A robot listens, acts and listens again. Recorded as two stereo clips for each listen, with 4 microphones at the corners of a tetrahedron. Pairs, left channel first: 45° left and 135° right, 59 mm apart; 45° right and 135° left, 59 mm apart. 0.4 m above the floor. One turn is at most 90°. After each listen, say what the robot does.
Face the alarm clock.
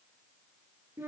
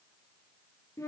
Keep listening.
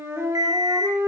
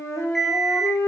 Turn 90° right.
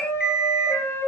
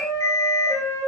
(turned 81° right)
Turn 60° right.
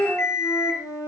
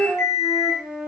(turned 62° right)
Found it: an alarm clock, straight ahead.